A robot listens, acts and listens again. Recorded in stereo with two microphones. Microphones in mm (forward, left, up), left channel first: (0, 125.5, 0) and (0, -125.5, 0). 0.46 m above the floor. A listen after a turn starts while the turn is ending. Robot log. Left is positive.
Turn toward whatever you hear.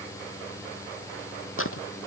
note: The tearing paper: about 55° left or 125° left.
cmd yaw +55
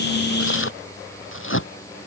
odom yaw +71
note: So it is at 55° left.
cmd yaw +55
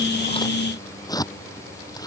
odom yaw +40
note: The tearing paper is now 15° left.
cmd yaw +15
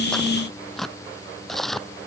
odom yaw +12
end: Found it: tearing paper, straight ahead.